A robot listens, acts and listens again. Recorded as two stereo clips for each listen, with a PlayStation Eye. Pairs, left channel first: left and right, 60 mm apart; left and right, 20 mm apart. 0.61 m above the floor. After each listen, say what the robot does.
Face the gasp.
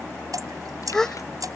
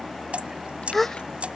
Turn 30° left.
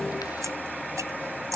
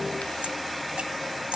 Keep listening.
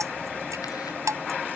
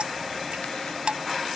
I heard a gasp, but can't make it out now. It was about 20° right or 140° left.